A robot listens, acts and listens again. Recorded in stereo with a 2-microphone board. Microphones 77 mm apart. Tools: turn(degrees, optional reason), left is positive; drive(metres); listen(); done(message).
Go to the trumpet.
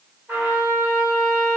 turn(degrees=-20, reason="The trumpet: about 20° right or 160° right.")
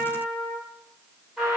drive(metres=1.0)
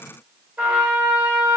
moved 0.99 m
turn(degrees=-15, reason="The trumpet is now 15° right.")
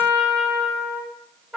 turn(degrees=-10, reason="The trumpet is now 10° right.")
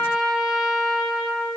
drive(metres=1.0)
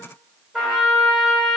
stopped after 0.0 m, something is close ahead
done("Arrived at the trumpet, straight ahead.")